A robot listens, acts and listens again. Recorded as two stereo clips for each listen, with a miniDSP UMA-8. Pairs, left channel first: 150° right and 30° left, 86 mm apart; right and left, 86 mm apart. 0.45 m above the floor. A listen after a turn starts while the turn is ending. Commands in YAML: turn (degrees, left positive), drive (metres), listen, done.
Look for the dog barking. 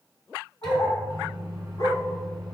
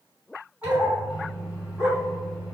turn: 170
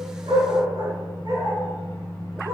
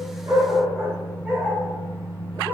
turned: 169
turn: 15
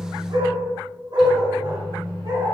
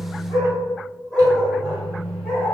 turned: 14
done: "Facing the dog barking."